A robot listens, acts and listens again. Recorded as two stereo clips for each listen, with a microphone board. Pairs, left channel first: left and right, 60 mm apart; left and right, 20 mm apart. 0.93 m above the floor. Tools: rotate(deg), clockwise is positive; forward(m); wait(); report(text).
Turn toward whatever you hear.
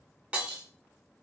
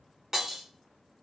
rotate(20)
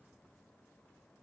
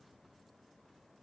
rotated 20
wait()
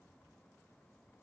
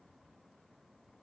report("I heard breaking glass, but can't make it out now. It was about straight ahead or 140° right.")